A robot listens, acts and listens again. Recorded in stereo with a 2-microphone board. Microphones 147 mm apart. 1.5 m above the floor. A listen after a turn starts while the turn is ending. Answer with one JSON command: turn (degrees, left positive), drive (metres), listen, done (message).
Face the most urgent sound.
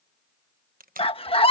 {"turn": 40}
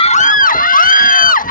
{"turn": 100}
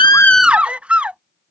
{"turn": -10}
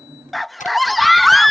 {"done": "Facing the scream."}